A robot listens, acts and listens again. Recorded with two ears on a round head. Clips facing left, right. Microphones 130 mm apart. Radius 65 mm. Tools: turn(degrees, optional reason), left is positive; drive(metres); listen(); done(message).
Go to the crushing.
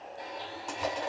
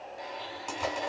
turn(degrees=30)
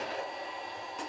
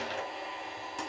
turn(degrees=-30, reason="So it is at 30° right.")
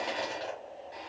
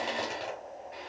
drive(metres=1.0)
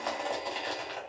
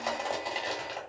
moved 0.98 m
drive(metres=1.0)
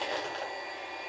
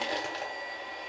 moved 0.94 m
turn(degrees=-10, reason="The crushing is now 10° right.")
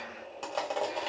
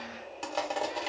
drive(metres=1.0)
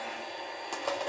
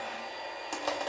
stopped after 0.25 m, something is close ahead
done("I am next to the crushing.")